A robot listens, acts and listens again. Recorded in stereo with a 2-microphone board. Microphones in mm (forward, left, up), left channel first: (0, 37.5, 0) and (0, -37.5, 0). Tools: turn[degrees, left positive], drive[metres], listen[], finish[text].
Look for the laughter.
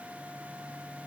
Action: listen[]
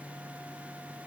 Action: listen[]
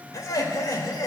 Thought: The laughter: about 50° left or 130° left.
Action: turn[50]
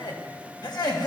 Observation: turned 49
Thought: So it is at 70° left.
Action: turn[70]
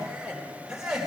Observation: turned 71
Thought: The laughter is now 10° right.
Action: turn[-10]
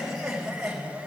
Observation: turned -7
Action: finish[Facing the laughter.]